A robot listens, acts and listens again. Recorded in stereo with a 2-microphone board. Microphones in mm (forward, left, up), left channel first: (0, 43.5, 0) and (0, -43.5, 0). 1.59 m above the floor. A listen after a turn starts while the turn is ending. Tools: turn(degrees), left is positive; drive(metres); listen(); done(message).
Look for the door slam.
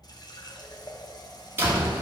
turn(degrees=-25)
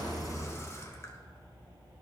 listen()
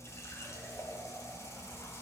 done("I heard a door slam, but can't make it out now. It was about straight ahead or 130° right.")